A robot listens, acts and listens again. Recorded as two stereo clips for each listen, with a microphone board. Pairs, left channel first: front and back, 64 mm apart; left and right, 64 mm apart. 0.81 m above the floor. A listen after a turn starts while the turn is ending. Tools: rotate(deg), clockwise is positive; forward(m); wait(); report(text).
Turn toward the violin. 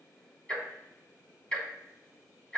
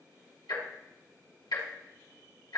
wait()
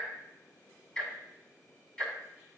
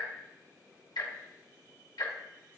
wait()
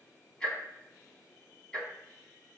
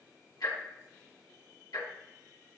report("I can't make out a violin, only ticking.")